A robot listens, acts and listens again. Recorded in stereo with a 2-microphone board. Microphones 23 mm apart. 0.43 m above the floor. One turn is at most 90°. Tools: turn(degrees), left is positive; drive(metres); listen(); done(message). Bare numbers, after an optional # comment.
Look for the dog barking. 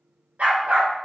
turn(-90)
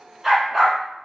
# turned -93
# So it is at 10° right.
turn(-10)
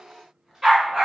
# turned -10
# The dog barking is now 20° right.
turn(-20)
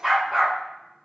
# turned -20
# The dog barking is now 10° right.
turn(-10)
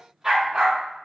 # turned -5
# The dog barking is now 30° right.
turn(-30)
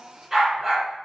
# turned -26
# The dog barking is now 15° right.
turn(-15)
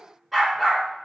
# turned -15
done("Facing the dog barking, 1 to 2 m away.")